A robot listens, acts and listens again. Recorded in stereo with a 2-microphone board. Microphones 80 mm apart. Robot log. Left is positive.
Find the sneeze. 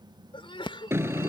cmd yaw +90
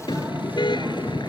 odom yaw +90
end: Facing where the sneeze came from. I can't hear it now.